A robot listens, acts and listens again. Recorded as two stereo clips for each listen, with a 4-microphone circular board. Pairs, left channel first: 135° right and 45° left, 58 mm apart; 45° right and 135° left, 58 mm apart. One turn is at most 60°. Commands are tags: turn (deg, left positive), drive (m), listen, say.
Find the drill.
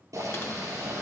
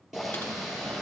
<listen/>
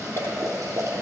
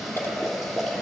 <listen/>
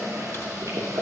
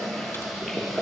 <say>I can't make out a drill to turn to.</say>